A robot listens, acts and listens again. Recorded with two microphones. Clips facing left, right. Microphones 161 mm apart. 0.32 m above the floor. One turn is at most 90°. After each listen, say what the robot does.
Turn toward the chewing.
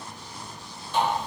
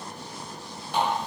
Keep listening.
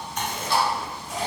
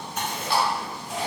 Turn 30° right.
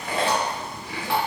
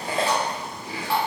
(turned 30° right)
Turn 90° right.
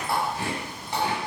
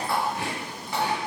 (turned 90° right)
Turn 80° right.
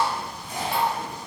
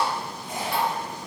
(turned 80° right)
Turn 20° right.
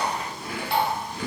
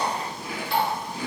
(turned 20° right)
Found it: chewing, straight ahead.